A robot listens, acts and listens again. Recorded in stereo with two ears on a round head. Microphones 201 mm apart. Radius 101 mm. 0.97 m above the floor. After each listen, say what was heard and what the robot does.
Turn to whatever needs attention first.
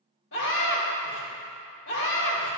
The scream: about 55° left or 125° left. Turn 55° left.
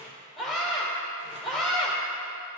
Facing the scream.